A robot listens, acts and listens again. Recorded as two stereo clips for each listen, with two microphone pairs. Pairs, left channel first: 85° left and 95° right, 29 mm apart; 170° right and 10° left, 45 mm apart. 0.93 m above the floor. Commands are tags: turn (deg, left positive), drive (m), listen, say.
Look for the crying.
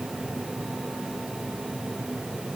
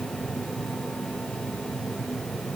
<listen/>
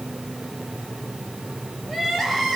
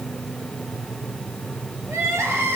<say>Facing the crying.</say>